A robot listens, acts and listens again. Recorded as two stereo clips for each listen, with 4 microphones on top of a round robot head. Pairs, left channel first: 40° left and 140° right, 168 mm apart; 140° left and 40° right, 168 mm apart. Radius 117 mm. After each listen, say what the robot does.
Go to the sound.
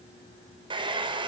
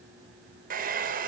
Turn 75° right.
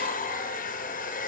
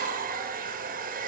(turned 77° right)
Drive 1.0 m forward.
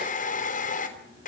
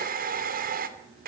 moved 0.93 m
Drive 1.0 m forward.
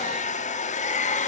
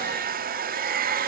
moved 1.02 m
Drive 1.0 m forward.
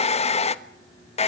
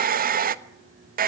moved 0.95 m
Turn 10° right.
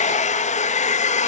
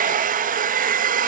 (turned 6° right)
Drive 1.0 m forward.
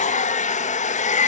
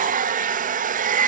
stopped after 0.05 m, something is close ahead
I am next to the hair dryer.